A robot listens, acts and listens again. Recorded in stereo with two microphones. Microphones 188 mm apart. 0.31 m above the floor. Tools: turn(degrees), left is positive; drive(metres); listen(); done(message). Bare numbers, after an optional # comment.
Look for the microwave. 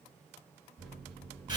turn(30)
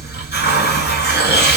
listen()
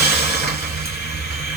listen()
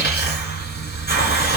done("I heard a microwave, but can't make it out now. It was about 25° right or 145° left.")